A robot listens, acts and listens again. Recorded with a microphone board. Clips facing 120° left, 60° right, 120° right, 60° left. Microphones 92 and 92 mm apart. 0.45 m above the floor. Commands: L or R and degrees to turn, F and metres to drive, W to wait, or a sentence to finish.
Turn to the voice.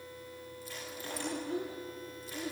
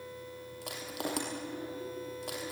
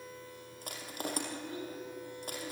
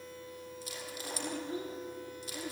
L120
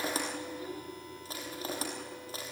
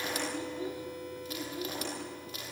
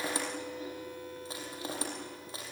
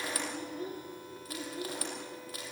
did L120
L10
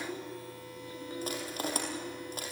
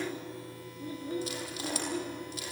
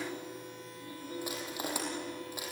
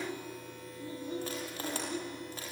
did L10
Found it: a child speaking, straight ahead, over 4 m away.